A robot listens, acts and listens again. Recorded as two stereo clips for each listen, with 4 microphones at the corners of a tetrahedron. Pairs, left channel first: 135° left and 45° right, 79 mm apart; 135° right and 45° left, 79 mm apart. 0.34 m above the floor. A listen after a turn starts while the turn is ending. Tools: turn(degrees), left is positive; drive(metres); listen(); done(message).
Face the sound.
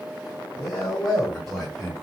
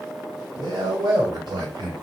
turn(degrees=45)
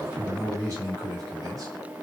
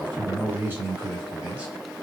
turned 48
turn(degrees=-25)
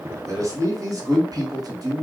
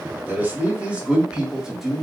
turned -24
turn(degrees=-40)
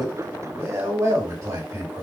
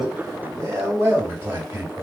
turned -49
turn(degrees=-10)
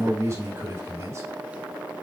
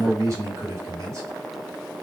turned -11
done("Facing the man speaking, 1 to 2 m away.")